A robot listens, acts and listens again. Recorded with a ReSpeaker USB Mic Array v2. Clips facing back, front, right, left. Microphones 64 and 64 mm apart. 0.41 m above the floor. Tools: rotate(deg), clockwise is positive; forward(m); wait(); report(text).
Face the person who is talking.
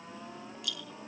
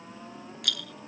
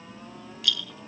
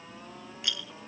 wait()
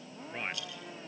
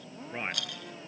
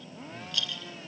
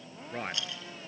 rotate(-75)
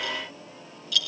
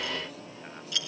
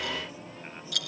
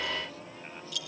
wait()
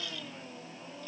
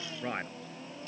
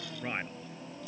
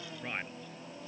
rotate(15)
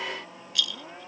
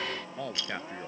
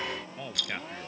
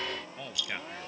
report("Facing the man speaking.")